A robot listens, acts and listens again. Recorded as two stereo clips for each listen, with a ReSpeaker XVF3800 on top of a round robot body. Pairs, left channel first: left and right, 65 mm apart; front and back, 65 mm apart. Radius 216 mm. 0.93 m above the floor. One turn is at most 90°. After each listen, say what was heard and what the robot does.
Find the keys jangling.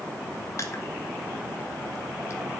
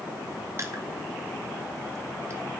Keep listening.
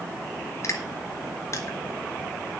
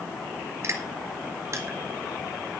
Keep listening.
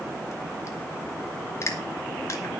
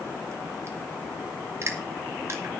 I can't make out keys jangling to turn to.